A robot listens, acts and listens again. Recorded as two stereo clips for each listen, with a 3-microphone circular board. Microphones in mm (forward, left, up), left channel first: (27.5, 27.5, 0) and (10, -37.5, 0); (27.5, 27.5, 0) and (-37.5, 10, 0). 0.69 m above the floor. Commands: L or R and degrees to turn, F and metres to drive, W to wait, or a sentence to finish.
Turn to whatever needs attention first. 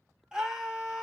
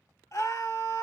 R30
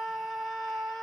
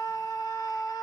R15
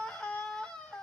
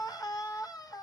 Facing the scream.